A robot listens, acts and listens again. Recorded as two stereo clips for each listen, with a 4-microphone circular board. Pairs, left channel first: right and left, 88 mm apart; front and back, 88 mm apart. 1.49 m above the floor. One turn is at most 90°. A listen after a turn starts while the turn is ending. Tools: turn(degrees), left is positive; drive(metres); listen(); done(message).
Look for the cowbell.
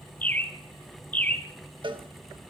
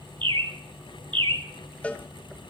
turn(degrees=75)
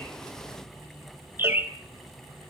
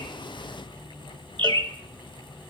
listen()
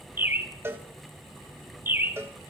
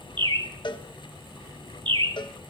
turn(degrees=30)
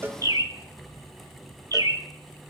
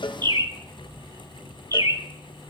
listen()
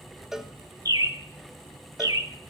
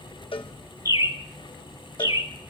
done("Found it: a cowbell, straight ahead, 1 to 2 m away.")